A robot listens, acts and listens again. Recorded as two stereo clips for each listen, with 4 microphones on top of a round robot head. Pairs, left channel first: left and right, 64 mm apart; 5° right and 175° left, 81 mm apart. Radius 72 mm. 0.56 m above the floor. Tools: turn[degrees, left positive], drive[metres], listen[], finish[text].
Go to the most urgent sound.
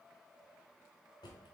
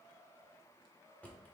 Action: listen[]
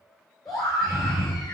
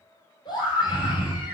Action: drive[1.0]
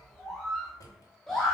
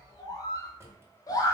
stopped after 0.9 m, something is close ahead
Action: finish[I am next to the scream.]